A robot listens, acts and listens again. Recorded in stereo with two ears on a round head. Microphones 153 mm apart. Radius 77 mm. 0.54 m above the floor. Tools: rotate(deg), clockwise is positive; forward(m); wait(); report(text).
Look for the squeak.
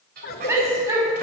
rotate(60)
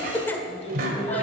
rotate(60)
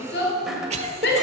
wait()
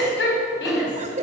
wait()
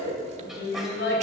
report("Facing where the squeak came from. I can't hear it now.")